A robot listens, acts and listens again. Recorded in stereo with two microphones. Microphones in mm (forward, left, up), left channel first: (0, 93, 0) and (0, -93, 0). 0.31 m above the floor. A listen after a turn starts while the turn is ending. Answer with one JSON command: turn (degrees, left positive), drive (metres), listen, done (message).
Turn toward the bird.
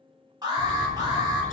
{"turn": 45}
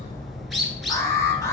{"done": "Found it: a bird, straight ahead, under 1 m away."}